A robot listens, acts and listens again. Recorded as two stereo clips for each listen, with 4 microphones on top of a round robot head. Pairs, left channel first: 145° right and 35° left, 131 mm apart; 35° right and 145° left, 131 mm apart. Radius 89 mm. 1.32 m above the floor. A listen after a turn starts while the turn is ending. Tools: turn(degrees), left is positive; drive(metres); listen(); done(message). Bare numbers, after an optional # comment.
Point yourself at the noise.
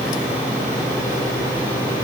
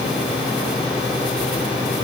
listen()
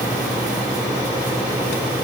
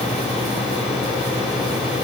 listen()
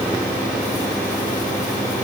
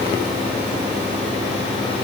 done("I can't make out anything.")